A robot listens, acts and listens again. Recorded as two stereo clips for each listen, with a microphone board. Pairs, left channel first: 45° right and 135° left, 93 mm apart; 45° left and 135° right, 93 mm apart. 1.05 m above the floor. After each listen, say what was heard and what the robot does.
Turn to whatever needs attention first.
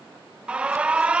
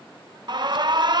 The alarm: 150° right. Turn 150° right.
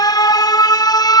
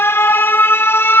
The alarm is now 15° right. Turn 15° right.
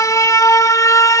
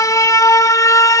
Facing the alarm.